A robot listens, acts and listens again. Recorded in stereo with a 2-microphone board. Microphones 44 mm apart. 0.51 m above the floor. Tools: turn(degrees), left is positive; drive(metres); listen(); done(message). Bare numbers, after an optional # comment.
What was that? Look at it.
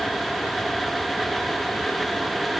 listen()
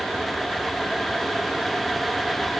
listen()
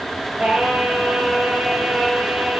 # The singing: about 20° right or 160° right.
turn(-20)
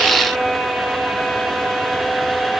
# So it is at 135° right.
turn(-135)
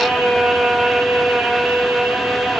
# The singing is now 50° right.
turn(-50)
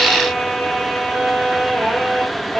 done("Found it: singing, straight ahead, 2 to 4 m away.")